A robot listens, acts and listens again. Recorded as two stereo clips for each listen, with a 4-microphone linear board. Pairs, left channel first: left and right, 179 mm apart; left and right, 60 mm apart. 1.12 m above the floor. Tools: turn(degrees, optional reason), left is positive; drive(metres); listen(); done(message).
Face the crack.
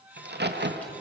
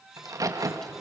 turn(degrees=-70, reason="The crack: about 70° right or 110° right.")
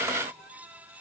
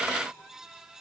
listen()
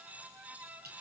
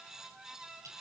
done("I heard a crack, but can't make it out now. It was about straight ahead or 40° right.")